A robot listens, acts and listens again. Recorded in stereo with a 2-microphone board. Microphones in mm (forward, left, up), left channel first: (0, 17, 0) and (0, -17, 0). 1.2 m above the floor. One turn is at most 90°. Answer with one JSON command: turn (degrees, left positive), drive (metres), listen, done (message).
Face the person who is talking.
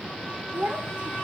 {"turn": -50}
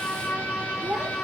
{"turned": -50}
{"turn": -75}
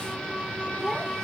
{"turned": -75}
{"listen": true}
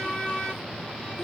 {"listen": true}
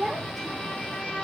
{"done": "Found it: a child speaking, straight ahead."}